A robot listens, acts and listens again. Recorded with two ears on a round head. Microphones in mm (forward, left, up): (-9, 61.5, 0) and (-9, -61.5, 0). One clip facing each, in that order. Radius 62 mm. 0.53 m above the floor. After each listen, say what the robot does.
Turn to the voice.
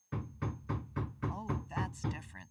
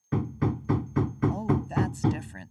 Turn 60° right.
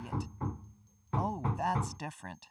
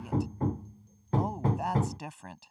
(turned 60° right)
Facing the woman speaking.